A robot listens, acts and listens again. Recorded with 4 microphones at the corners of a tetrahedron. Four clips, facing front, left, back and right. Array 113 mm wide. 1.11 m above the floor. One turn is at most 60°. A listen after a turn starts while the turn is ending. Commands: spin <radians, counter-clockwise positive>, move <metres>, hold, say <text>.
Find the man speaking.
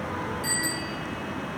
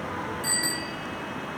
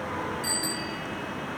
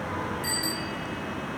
hold
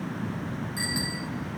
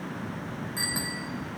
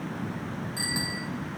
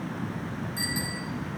hold
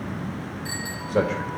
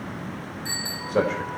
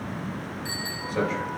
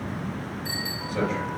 spin 0.79
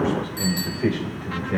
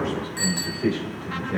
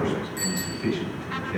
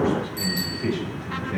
spin 0.26
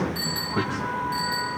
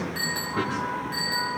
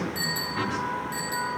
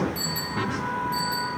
hold
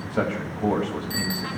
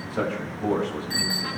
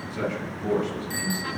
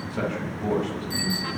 say Found it: a man speaking, straight ahead.